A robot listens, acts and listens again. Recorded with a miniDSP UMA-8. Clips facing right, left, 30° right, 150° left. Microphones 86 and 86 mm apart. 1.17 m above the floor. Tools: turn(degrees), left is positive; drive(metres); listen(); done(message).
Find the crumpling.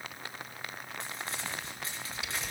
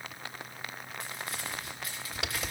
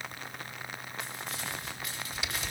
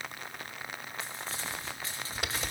turn(degrees=-150)
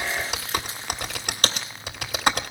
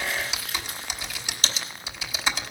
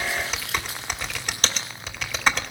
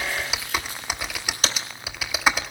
listen()
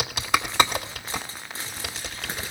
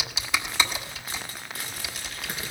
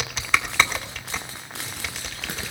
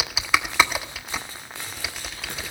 turn(degrees=-30)
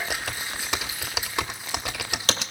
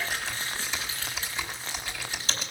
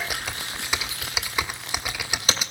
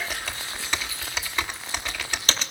listen()
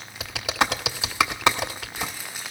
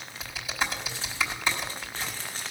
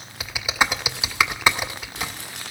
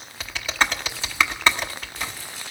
turn(degrees=-10)
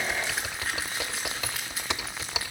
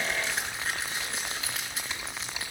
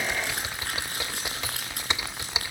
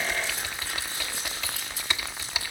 done("Facing the crumpling.")